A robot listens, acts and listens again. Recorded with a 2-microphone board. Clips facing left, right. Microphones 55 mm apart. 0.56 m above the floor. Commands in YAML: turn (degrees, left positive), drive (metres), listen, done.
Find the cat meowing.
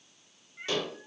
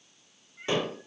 turn: 20
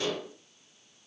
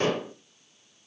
listen: true
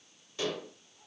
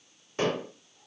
listen: true
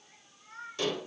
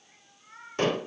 done: "Found it: a cat meowing, straight ahead, 2 to 4 m away."